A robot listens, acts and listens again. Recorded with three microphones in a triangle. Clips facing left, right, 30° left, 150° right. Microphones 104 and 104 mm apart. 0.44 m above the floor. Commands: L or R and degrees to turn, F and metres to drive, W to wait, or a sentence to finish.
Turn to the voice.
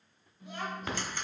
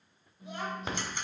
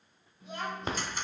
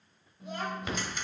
R160
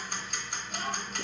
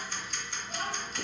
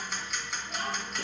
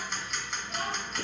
R50
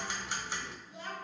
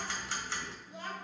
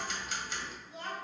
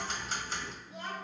R20
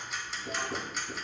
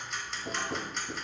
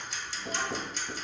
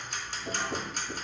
W
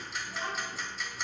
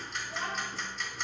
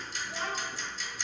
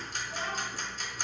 W
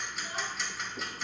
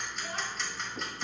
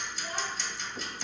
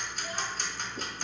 I heard a child speaking from this way, but can't make it out now.